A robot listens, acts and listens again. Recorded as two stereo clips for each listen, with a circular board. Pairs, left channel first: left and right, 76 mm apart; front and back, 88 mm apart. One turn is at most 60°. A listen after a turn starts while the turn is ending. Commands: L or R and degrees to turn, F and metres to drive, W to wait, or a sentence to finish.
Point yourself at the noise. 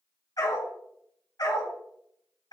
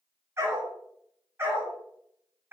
L60
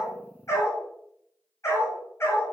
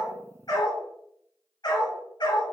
L35
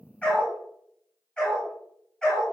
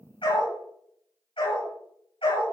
L10
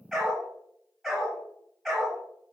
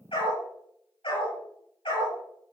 Found it: a dog barking, straight ahead, over 4 m away.